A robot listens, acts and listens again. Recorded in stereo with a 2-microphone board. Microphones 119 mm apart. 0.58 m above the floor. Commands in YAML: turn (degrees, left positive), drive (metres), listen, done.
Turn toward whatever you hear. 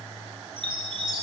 turn: -45
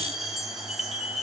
done: "Facing the chime."